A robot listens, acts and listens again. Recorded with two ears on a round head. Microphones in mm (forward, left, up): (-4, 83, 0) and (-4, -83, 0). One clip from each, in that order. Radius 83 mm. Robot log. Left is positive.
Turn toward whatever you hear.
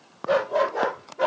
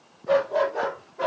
cmd yaw +30
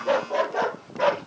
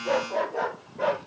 note: So it is at 140° left.
cmd yaw +140
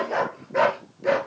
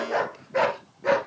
note: The dog barking is now 20° right.
cmd yaw -20
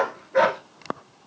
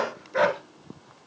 end: Found it: a dog barking, straight ahead, 1 to 2 m away.